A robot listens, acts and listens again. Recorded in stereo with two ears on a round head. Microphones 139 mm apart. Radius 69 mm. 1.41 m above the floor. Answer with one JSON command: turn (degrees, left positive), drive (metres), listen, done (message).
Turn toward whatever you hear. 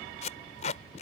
{"turn": 45}
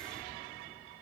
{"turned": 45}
{"listen": true}
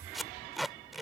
{"done": "Found it: tape being pulled, straight ahead."}